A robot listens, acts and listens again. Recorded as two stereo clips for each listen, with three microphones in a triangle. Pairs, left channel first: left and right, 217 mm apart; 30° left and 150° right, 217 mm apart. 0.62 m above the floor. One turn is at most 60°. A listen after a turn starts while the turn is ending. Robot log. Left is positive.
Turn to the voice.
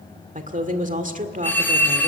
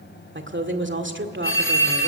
note: The woman speaking: 140° right.
cmd yaw -60
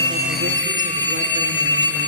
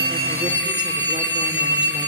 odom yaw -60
note: Nothing new. It was at 80° right.
cmd yaw -60
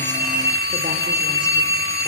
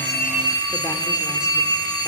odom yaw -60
note: Nothing new. It was at 20° right.
cmd yaw -20
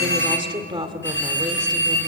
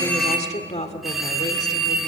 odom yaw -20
note: The woman speaking is now 25° right.
cmd yaw -25
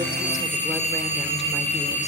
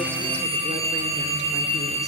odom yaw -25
cmd idle
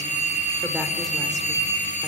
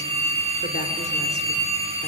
cmd idle
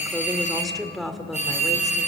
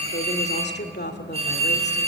end: Found it: a woman speaking, straight ahead.